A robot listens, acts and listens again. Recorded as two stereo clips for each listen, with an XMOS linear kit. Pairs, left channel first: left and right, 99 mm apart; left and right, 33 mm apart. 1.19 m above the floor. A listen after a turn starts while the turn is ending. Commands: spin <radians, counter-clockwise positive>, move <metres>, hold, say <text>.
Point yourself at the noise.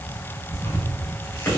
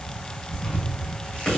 spin 0.35
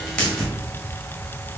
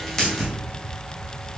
say Facing the tearing paper.